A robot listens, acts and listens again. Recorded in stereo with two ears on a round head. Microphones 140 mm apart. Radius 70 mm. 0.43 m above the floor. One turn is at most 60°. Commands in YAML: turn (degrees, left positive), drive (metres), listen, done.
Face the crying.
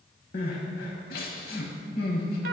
turn: 60
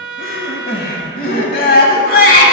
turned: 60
turn: 60
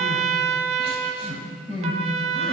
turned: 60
turn: 35
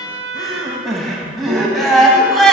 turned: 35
done: "Facing the crying, 1 to 2 m away."